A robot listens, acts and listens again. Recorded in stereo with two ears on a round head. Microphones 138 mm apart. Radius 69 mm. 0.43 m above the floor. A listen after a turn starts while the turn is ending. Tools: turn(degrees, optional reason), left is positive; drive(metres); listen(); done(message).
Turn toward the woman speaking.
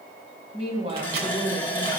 turn(degrees=-35, reason="The woman speaking: about 35° right or 145° right.")
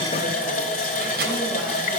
listen()
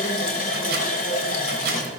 listen()
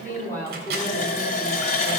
turn(degrees=15, reason="So it is at 15° left.")
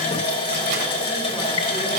listen()
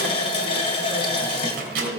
done("Found it: a woman speaking, straight ahead.")